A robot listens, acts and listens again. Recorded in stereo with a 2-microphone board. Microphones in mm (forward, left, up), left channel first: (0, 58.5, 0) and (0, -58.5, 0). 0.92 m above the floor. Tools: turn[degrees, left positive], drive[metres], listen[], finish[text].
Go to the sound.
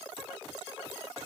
Action: listen[]
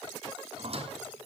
Thought: The squeak: about 55° right or 125° right.
Action: turn[-55]
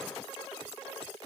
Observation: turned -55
Action: listen[]
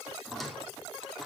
Action: drive[1.0]
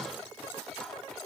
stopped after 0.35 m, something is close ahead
Action: finish[Something is in my way. I am facing the squeak but have not reached it.]